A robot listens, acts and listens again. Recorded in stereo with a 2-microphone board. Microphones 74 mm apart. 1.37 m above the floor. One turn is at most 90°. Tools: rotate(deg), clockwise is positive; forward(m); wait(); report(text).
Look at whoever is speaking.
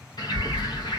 rotate(-15)
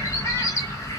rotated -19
report("Facing the child speaking, 1 to 2 m away.")